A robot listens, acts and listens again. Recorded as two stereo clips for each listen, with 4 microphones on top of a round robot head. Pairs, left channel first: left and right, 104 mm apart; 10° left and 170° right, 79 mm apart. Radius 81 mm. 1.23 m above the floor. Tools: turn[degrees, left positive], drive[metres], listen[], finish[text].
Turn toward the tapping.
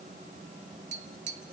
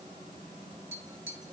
Thought: The tapping: 100° right.
Action: turn[-100]
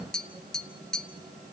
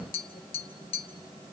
Action: finish[Facing the tapping.]